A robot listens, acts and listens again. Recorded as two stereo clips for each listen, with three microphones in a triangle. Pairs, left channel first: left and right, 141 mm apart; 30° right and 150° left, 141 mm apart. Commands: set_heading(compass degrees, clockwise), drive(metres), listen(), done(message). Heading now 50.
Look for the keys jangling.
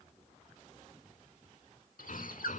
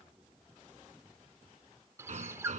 listen()
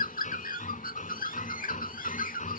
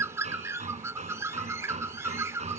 listen()
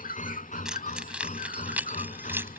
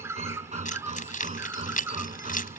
set_heading(60)
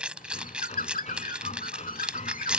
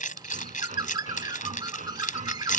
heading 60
done("Found it: keys jangling, straight ahead.")